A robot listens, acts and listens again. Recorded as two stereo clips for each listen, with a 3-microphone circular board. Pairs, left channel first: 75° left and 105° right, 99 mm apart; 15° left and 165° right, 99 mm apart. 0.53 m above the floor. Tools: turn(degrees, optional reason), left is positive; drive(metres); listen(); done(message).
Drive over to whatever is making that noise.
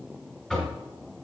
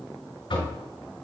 drive(metres=1.0)
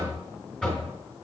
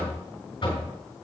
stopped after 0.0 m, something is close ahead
done("Something is in my way. I am facing the knocking but have not reached it.")